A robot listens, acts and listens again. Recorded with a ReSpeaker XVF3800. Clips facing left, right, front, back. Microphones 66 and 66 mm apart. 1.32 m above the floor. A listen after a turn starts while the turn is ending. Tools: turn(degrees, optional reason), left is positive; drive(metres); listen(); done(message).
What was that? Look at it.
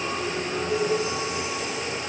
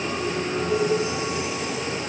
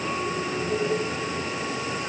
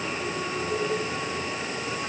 listen()
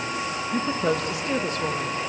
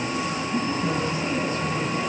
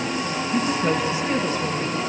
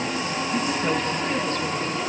turn(degrees=80, reason="The woman speaking: 80° left.")
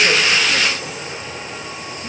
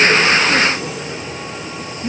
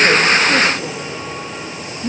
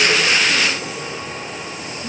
turn(degrees=-20, reason="The woman speaking is now 20° right.")
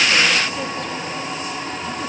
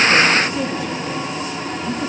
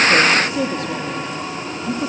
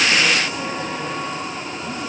done("Found it: a woman speaking, straight ahead.")